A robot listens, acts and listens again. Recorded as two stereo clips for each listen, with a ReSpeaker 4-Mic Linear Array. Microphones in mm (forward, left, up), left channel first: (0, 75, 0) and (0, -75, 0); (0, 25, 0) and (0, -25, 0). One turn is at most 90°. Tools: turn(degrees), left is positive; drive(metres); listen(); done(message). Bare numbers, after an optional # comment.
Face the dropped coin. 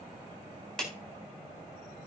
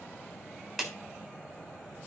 listen()
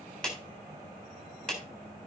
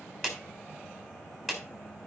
listen()
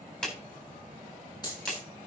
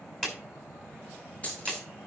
# The dropped coin: about 25° left or 155° left.
turn(25)
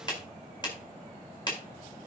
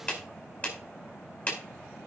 listen()
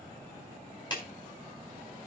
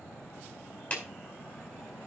done("I heard a dropped coin, but can't make it out now. It was about straight ahead or 130° left.")